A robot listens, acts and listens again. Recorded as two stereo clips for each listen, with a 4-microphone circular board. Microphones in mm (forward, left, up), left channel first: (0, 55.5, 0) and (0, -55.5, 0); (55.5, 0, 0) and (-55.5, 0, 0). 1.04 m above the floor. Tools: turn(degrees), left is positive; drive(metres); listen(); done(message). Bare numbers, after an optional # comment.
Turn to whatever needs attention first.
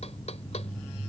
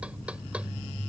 listen()
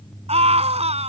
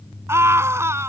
# The scream: 115° right.
turn(-115)
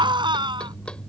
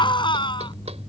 # The scream is now 45° right.
turn(-45)
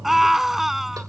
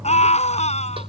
done("Facing the scream.")